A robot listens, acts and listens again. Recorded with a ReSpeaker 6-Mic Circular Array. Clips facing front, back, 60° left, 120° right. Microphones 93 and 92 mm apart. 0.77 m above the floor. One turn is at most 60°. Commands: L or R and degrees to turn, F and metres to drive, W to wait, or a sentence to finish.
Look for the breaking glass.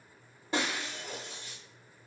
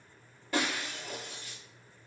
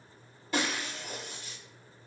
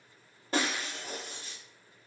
R60
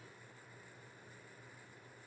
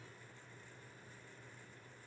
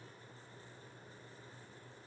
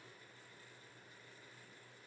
I heard breaking glass from this way, but can't make it out now.